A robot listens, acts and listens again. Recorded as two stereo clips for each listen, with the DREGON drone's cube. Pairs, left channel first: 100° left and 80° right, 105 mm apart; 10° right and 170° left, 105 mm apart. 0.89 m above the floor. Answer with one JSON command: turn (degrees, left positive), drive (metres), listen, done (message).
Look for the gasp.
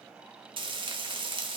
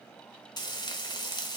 {"listen": true}
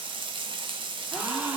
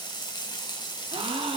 {"turn": -160}
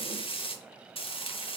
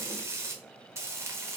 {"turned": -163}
{"done": "I heard a gasp from this way, but can't make it out now."}